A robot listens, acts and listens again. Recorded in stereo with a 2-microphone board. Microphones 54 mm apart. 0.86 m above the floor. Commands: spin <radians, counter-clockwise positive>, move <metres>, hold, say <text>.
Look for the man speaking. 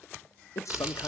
spin 1.22
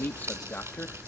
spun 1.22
spin 0.61
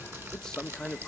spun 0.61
spin 0.17
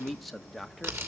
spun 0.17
say Found it: a man speaking, straight ahead, 1 to 2 m away.